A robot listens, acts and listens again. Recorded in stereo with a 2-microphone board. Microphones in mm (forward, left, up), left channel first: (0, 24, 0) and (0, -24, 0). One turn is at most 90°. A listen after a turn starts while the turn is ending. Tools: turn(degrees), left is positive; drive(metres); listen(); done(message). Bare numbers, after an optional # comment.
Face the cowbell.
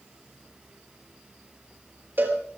# The cowbell: about 45° right or 135° right.
turn(-45)
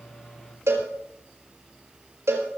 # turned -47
# So it is at 85° right.
turn(-85)
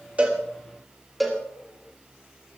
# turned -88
done("Facing the cowbell.")